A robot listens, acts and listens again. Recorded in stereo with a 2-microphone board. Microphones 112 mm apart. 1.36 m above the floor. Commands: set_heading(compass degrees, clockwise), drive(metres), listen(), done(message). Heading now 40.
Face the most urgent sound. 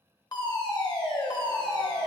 set_heading(0)
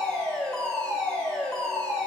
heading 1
set_heading(351)
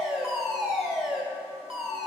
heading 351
done("Facing the fire alarm.")